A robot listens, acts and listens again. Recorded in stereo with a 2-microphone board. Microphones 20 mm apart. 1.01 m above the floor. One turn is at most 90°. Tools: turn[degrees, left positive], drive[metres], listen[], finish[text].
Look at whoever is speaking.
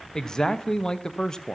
Thought: The man speaking: about 35° left or 145° left.
Action: turn[35]
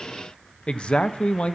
Thought: So it is at 105° left.
Action: turn[90]
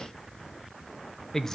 Thought: The man speaking is now 25° left.
Action: turn[25]
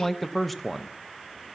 Action: finish[Found it: a man speaking, straight ahead, under 1 m away.]